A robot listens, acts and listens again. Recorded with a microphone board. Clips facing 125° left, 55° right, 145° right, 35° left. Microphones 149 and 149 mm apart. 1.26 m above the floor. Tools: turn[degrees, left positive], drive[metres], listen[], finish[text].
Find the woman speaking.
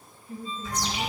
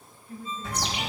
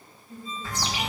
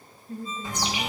Thought: The woman speaking: 60° left.
Action: turn[60]
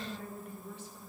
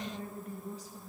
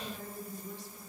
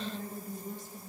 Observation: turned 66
Action: finish[Facing the woman speaking, 1 to 2 m away.]